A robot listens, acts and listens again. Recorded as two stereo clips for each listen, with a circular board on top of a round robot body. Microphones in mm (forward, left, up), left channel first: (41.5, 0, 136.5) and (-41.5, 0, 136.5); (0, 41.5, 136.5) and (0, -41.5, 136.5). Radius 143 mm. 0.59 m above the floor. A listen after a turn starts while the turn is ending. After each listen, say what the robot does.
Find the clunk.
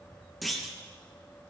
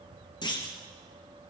Turn 90° left.
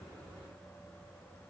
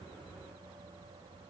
I heard a clunk from this way, but can't make it out now.